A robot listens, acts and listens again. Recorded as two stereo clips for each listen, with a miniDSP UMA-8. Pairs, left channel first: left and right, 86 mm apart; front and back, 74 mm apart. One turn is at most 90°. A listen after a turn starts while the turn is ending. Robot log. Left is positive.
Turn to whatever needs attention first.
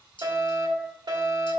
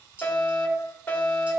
note: The fire alarm: 65° right.
cmd yaw -65
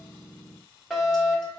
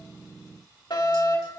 end: Facing the fire alarm.